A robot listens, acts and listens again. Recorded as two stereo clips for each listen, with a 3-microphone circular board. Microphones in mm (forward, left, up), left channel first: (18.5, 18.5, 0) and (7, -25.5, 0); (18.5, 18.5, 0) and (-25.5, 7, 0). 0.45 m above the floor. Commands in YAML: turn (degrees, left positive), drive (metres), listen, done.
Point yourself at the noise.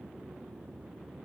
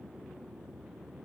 listen: true
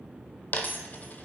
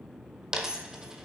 turn: 120
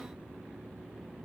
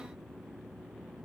done: "I heard a dropped coin from this way, but can't make it out now."